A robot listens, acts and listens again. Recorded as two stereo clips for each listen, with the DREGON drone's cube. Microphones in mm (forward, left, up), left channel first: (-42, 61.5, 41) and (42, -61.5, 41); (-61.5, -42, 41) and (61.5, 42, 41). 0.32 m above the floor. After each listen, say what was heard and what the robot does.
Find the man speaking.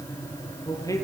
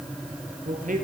The man speaking: 55° left. Turn 55° left.
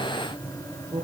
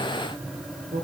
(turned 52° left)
Facing the man speaking.